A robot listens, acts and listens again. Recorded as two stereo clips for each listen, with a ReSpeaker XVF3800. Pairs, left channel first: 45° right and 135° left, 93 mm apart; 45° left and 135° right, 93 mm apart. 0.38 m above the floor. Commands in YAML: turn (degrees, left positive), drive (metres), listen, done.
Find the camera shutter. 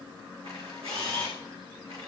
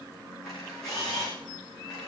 turn: 130
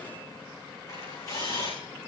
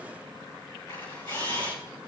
done: "Found it: a camera shutter, straight ahead, over 4 m away."